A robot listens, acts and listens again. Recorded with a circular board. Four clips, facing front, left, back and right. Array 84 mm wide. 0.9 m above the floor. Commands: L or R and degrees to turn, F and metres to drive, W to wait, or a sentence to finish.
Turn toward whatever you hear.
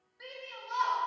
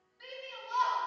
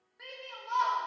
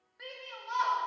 R125
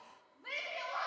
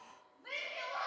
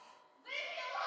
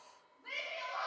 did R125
Facing the shout, 1 to 2 m away.